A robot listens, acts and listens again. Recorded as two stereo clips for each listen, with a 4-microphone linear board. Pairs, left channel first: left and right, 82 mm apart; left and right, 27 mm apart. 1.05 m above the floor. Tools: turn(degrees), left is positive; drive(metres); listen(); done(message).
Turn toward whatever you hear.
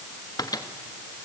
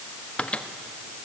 turn(degrees=50)
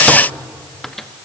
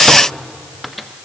listen()
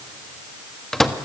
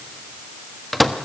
done("Found it: a microwave, straight ahead.")